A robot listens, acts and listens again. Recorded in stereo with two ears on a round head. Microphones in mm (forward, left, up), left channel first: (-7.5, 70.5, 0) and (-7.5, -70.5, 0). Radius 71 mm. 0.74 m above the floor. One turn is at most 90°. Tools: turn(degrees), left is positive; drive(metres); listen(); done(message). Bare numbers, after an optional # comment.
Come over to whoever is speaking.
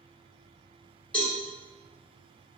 listen()
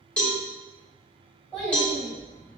turn(30)
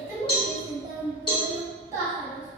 # So it is at 20° right.
turn(-20)
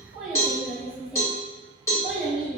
drive(1.0)
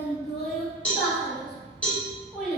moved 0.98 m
drive(1.0)
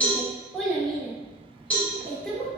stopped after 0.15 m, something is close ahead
done("I am next to the child speaking.")